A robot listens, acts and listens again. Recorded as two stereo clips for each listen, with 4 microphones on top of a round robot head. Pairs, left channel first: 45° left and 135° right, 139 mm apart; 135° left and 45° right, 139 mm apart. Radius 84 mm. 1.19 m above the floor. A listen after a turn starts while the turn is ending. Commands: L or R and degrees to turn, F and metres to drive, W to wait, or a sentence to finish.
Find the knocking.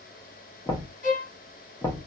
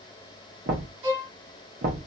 R25
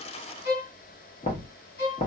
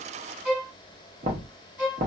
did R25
Facing the knocking, under 1 m away.